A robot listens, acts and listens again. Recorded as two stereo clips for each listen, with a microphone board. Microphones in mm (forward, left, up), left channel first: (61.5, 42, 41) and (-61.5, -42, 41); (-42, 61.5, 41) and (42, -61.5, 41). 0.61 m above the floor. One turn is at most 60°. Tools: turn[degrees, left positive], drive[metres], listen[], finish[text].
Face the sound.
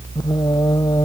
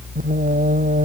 Thought: The singing: 30° right.
Action: turn[-30]
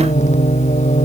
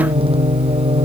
Action: finish[Facing the singing.]